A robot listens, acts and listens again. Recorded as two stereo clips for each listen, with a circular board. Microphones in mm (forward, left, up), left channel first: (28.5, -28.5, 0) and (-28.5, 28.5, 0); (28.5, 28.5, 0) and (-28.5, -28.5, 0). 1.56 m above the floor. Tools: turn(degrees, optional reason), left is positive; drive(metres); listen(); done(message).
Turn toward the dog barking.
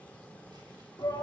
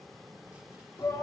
listen()
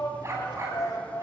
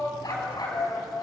turn(degrees=80, reason="The dog barking: 80° left.")
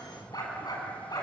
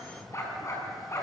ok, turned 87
done("Found it: a dog barking, straight ahead, over 4 m away.")